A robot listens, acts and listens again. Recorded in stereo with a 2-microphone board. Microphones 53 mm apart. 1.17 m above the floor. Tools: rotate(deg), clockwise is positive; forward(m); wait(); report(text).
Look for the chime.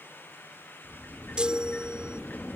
rotate(20)
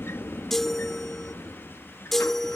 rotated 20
report("Facing the chime.")